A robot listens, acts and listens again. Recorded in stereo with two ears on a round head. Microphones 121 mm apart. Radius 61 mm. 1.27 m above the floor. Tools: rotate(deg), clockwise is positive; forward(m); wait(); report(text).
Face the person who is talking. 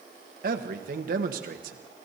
rotate(70)
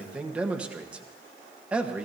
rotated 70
rotate(10)
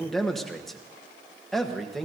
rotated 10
report("Facing the man speaking, 1 to 2 m away.")